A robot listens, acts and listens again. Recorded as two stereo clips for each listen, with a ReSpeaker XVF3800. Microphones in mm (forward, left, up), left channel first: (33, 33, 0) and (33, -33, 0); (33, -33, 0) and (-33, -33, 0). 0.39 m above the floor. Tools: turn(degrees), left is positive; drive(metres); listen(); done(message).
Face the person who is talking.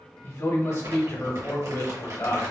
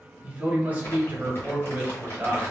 turn(degrees=120)
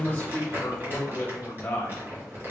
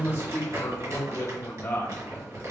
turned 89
turn(degrees=30)
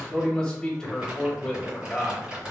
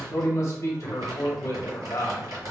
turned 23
turn(degrees=10)
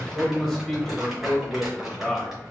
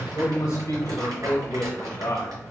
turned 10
done("Facing the man speaking, 1 to 2 m away.")